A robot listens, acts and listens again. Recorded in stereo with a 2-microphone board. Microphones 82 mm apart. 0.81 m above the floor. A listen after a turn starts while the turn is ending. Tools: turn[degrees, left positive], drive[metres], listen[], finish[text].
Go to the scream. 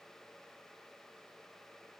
Action: listen[]
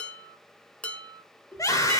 Thought: The scream: about 40° left or 140° left.
Action: turn[40]
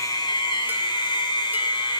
Thought: So it is at 100° left.
Action: turn[100]
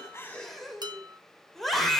Action: drive[1.0]
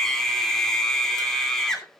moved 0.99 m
Thought: The scream is now 10° left.
Action: turn[10]
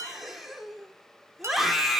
Action: drive[1.0]
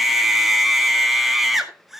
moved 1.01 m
Action: drive[1.0]
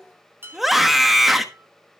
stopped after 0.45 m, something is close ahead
Action: finish[Arrived at the scream, straight ahead.]